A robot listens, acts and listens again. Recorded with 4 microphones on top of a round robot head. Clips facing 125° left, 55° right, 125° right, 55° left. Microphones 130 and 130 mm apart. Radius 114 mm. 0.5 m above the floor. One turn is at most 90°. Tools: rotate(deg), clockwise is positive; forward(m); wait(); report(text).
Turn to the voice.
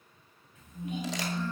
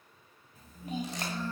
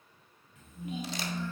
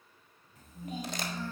report("Found it: a child speaking, straight ahead, 2 to 4 m away.")